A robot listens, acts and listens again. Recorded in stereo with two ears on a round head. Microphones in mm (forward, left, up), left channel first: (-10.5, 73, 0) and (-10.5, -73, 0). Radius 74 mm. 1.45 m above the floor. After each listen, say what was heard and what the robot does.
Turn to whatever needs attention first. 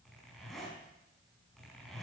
Keep listening.
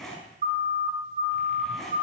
The siren: about 45° right or 135° right. Turn 45° right.
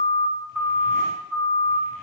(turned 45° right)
Found it: a siren, straight ahead, 2 to 4 m away.